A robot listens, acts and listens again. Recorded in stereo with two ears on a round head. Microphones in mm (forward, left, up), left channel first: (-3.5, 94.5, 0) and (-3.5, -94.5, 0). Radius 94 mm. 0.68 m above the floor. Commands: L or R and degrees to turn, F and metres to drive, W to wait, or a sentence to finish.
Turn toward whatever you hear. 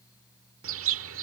R70
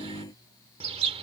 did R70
R30
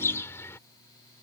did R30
L15
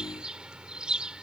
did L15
Facing the bird.